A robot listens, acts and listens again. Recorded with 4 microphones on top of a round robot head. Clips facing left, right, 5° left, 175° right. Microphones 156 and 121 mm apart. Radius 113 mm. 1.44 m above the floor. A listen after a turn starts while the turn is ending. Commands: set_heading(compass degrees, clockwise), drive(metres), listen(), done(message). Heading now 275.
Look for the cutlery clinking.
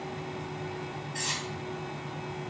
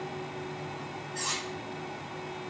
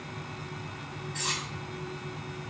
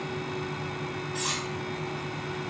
set_heading(170)
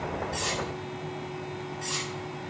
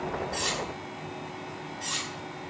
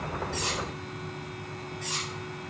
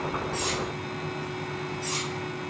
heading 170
set_heading(195)
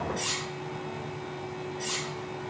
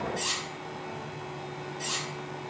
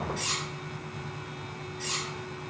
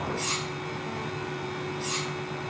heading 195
set_heading(210)
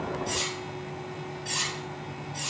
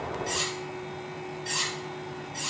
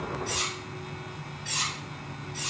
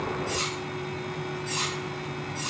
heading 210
done("Facing the cutlery clinking, 1 to 2 m away.")